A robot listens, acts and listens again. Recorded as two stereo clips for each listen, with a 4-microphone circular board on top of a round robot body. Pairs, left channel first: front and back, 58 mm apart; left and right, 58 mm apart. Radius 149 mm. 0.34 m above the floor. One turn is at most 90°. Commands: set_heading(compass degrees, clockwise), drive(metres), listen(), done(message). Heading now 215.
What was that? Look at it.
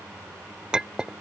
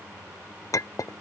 set_heading(125)
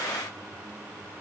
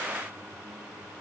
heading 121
set_heading(111)
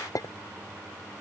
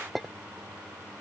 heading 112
done("Found it: a clink, straight ahead.")